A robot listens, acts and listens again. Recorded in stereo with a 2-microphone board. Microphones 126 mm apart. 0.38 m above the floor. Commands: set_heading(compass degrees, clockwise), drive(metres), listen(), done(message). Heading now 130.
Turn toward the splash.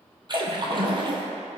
set_heading(170)
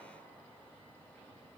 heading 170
listen()
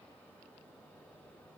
done("I heard a splash, but can't make it out now. It was about straight ahead or 100° right.")